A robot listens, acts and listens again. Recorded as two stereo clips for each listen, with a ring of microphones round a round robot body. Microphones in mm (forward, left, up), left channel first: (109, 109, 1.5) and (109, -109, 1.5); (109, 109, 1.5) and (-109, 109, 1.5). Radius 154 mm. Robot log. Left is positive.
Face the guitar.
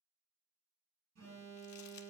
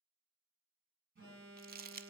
cmd idle
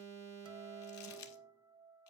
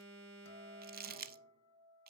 note: The guitar: 20° right.
cmd yaw -20
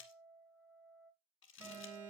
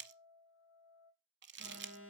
note: The guitar is now 10° right.
cmd yaw -10
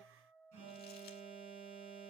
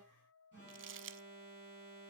end: Facing the guitar.